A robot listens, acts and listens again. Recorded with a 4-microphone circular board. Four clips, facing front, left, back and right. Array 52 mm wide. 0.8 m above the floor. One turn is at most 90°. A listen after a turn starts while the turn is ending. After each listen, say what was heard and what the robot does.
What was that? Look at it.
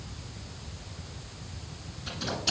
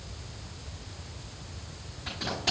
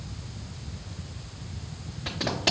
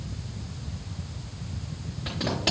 The tape being pulled: 140° right. Turn 90° right.
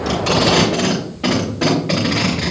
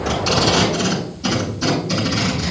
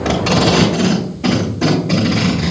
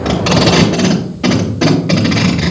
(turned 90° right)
The tape being pulled is now 55° right. Turn 55° right.
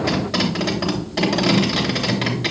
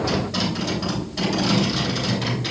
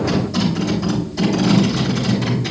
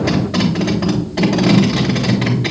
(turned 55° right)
The tape being pulled is now 25° right. Turn 25° right.
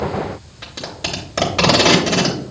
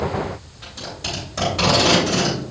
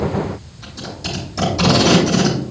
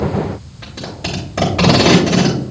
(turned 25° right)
The tape being pulled is now 10° right. Turn 10° right.
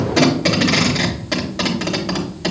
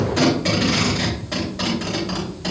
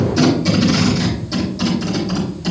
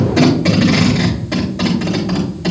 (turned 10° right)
Facing the tape being pulled.